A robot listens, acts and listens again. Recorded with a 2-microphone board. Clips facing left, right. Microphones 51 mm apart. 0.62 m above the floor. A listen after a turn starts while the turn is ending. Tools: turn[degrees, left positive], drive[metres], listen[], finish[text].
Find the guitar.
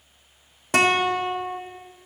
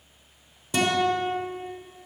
Thought: The guitar: about 65° left or 115° left.
Action: turn[65]
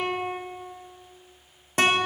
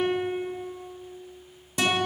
Thought: So it is at 50° left.
Action: turn[50]
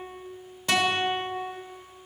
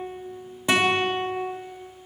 Thought: The guitar is now 15° right.
Action: turn[-15]
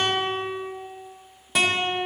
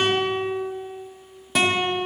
Action: finish[Facing the guitar.]